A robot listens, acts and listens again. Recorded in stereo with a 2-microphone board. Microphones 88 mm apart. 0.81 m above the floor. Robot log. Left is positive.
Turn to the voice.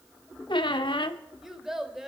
cmd yaw -30
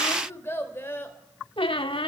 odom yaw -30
note: So it is at 25° left.
cmd yaw +25
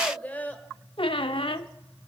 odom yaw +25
note: The child speaking is now 15° left.
cmd yaw +15
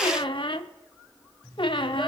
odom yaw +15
cmd idle
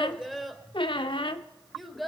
end: Found it: a child speaking, straight ahead, 2 to 4 m away.